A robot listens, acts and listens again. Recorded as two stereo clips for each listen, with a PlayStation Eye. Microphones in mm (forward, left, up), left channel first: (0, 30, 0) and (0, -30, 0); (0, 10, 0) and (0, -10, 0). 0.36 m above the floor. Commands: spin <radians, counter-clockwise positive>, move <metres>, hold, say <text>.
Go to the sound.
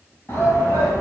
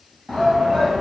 spin 0.79
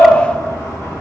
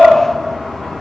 spin 1.40
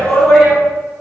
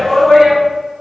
move 1.0
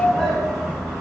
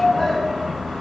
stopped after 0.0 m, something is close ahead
say Something is in my way. I am facing the shout but have not reached it.